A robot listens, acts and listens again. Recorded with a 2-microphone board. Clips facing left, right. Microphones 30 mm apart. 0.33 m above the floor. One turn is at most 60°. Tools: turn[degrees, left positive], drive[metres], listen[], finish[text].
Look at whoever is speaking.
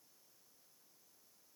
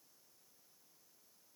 Action: listen[]
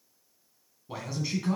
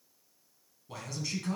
Thought: The man speaking: about 15° left or 165° left.
Action: turn[15]
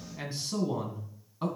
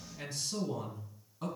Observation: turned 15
Thought: So it is at 150° left.
Action: turn[60]
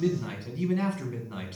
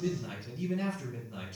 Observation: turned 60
Thought: The man speaking is now 105° left.
Action: turn[60]
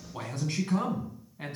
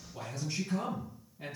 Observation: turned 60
Thought: The man speaking is now 80° left.
Action: turn[60]
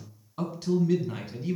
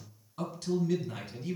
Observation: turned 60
Thought: The man speaking is now 20° left.
Action: turn[20]
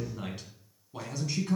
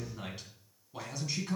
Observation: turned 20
Action: finish[Facing the man speaking.]